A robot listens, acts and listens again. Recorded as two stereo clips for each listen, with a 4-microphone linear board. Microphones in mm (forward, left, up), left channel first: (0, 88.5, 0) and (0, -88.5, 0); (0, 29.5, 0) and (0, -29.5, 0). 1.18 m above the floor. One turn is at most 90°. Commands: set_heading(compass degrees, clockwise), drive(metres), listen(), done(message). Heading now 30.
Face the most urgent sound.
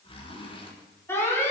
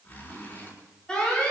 set_heading(0)
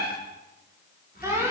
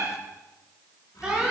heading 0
set_heading(15)
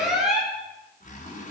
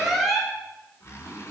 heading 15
done("Found it: an alarm, straight ahead, over 4 m away.")